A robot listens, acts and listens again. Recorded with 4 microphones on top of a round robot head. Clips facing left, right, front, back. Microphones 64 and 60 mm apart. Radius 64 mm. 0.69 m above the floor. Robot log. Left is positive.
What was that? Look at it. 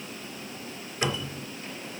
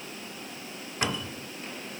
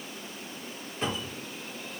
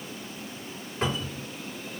note: The cupboard door: 130° right.
cmd yaw -130
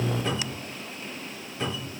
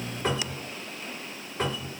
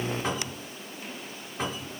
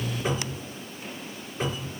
note: The cupboard door is now 40° right.
cmd yaw -40
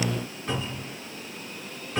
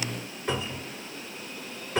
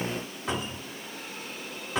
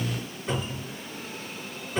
note: The cupboard door is now 10° right.
cmd yaw -10
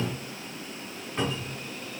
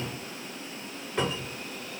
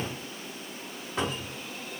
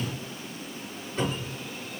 end: Facing the cupboard door.